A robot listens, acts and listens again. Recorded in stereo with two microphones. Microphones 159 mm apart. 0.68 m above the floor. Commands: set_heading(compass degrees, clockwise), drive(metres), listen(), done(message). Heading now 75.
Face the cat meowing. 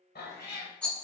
set_heading(345)
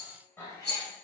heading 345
set_heading(325)
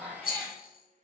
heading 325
done("Facing the cat meowing, 1 to 2 m away.")